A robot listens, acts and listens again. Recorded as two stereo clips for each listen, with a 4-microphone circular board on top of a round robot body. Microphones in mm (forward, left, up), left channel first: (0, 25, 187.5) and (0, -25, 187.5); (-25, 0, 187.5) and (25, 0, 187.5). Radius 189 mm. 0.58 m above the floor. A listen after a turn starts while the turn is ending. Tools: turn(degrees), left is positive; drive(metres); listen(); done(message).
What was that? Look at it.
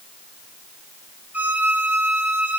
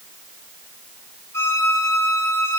turn(degrees=-145)
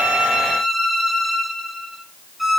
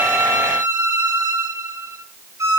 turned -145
done("Found it: a violin, straight ahead.")